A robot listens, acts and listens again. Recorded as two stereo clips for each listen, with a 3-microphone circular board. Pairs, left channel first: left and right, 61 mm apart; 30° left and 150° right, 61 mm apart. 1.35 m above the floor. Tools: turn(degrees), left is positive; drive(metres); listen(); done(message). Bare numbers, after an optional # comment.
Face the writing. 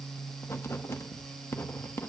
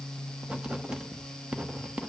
# The writing: 135° left.
turn(135)
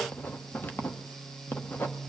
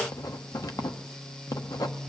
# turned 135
# The writing is now 35° left.
turn(35)
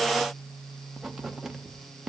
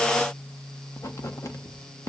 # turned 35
done("Facing the writing, under 1 m away.")